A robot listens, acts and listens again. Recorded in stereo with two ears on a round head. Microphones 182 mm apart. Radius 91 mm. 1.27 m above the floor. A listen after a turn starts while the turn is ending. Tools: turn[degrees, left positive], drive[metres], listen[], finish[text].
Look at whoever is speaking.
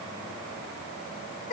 Action: listen[]
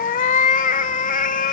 Action: listen[]
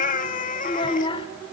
Thought: The child speaking: about 25° left or 155° left.
Action: turn[25]
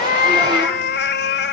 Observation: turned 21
Action: listen[]
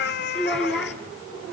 Action: finish[Facing the child speaking.]